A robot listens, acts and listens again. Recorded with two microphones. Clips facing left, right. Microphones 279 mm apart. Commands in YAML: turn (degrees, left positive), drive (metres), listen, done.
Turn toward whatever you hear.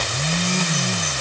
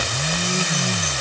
listen: true
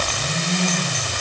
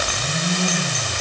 listen: true
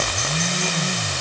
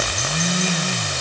done: "I can't make out anything to turn to."